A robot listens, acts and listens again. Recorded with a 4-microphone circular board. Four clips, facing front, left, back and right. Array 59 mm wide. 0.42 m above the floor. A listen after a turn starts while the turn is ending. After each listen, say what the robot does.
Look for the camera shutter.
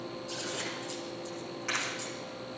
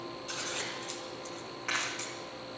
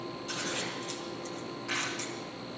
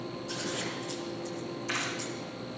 Turn 65° left.
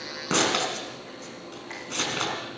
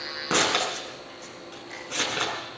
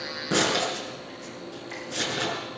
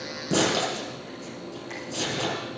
Keep listening.
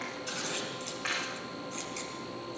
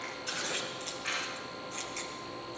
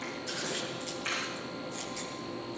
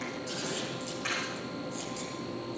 Turn 15° right.
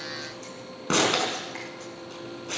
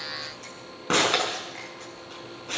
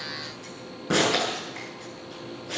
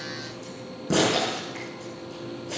Keep listening.
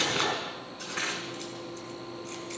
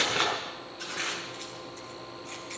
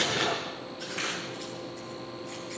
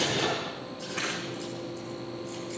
Keep listening.
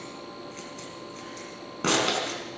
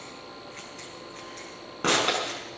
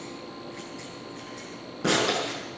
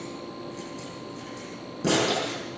Facing where the camera shutter came from. I can't hear it now.